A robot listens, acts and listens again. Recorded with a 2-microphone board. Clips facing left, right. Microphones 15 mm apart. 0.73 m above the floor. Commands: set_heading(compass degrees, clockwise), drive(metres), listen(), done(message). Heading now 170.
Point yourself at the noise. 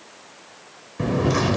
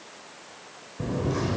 set_heading(110)
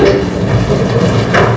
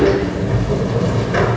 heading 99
set_heading(49)
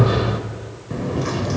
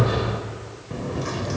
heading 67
set_heading(52)
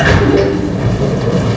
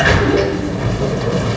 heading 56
done("Found it: a sliding door, straight ahead, 1 to 2 m away.")